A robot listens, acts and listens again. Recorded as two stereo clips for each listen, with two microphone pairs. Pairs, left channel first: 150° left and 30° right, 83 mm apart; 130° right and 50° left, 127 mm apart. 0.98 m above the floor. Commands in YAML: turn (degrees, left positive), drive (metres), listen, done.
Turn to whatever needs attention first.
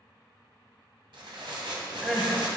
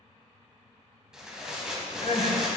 turn: -115
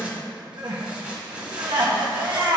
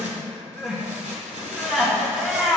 turn: -35
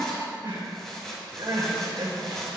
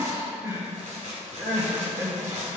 turn: -15
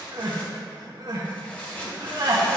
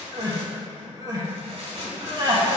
done: "Facing the crying, 1 to 2 m away."